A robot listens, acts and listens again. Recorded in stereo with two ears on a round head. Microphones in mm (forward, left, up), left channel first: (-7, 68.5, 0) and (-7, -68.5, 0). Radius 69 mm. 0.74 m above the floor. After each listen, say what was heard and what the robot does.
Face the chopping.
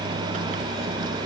Keep listening.
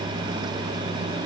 Keep listening.
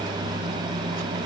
I can't make out chopping to turn to.